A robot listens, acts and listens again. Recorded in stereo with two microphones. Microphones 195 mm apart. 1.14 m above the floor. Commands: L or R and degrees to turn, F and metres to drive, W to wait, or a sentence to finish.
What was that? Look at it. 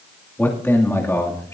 L30
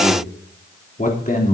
L135
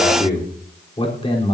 L30
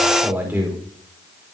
R10
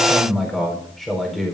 Found it: a man speaking, straight ahead, over 4 m away.